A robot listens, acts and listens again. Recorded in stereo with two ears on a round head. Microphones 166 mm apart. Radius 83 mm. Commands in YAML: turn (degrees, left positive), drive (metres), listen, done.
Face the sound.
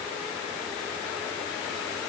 listen: true
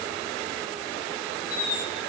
turn: 55
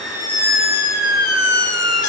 turn: 65
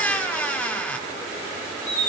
turn: 10
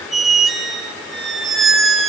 done: "Facing the squeak, 2 to 4 m away."